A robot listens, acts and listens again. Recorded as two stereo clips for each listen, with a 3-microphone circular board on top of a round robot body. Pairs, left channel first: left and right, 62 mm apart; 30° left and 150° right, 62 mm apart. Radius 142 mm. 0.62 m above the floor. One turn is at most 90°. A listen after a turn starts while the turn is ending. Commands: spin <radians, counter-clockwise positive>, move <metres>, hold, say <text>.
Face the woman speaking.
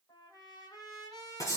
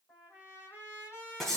hold
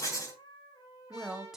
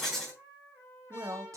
spin -1.57
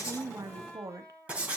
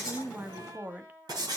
spin -1.57
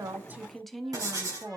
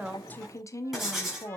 say Facing the woman speaking, 1 to 2 m away.